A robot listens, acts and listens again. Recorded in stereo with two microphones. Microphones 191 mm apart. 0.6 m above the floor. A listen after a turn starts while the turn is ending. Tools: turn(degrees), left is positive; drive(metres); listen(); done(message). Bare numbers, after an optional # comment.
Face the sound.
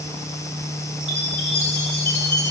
turn(-90)
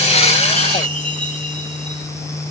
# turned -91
done("Facing the chime, 2 to 4 m away.")